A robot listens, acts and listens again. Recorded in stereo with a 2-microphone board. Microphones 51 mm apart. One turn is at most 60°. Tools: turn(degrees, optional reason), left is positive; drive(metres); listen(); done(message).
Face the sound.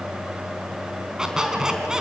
turn(degrees=-30)
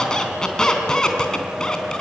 turn(degrees=15, reason="So it is at 15° left.")
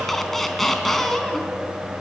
done("Found it: a squeak, straight ahead.")